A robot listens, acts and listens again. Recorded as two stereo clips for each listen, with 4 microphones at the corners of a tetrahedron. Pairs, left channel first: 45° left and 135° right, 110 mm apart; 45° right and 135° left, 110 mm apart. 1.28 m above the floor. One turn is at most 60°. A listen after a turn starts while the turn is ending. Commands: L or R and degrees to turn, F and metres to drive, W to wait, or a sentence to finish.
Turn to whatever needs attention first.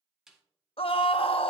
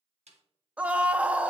L60
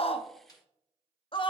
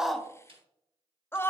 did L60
L20
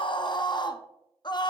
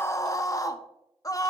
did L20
Found it: a scream, straight ahead, under 1 m away.